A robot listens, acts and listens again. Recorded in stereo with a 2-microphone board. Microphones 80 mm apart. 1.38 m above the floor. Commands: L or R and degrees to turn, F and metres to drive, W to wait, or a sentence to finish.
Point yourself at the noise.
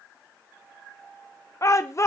L40
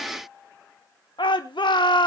L100
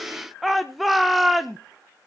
Found it: a shout, straight ahead.